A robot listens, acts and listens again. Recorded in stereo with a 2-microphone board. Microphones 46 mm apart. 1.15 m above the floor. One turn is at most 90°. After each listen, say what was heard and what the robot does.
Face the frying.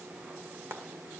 The frying: about 65° right or 115° right. Turn 65° right.
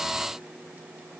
Keep listening.
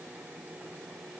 Keep listening.
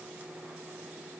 I heard frying, but can't make it out now. It was about straight ahead or 50° right.